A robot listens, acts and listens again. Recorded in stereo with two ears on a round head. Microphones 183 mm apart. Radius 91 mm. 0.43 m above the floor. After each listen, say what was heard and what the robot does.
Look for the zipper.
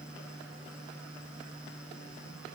Keep listening.
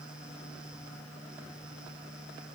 Keep listening.
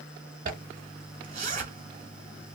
The zipper: about 40° right or 140° right. Turn 40° right.
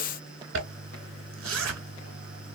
So it is at 100° right. Turn 100° right.
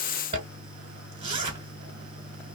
The zipper is now 35° right. Turn 35° right.
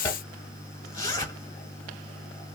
The zipper is now 20° left. Turn 20° left.
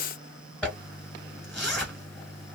Found it: a zipper, straight ahead, 1 to 2 m away.